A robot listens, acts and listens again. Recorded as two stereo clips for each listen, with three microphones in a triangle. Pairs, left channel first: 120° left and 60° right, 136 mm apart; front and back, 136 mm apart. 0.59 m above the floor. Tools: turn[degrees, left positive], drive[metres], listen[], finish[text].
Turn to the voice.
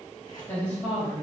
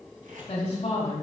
Thought: The woman speaking: 40° left.
Action: turn[40]
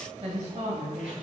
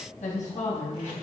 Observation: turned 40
Thought: The woman speaking is now 20° right.
Action: turn[-20]
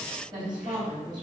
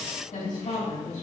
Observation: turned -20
Action: finish[Found it: a woman speaking, straight ahead.]